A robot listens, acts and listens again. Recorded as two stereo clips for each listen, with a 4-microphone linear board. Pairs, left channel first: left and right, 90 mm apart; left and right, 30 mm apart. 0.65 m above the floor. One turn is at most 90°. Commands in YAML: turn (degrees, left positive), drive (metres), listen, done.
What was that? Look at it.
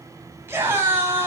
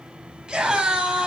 turn: -25
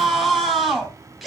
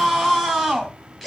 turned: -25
done: "Found it: a scream, straight ahead."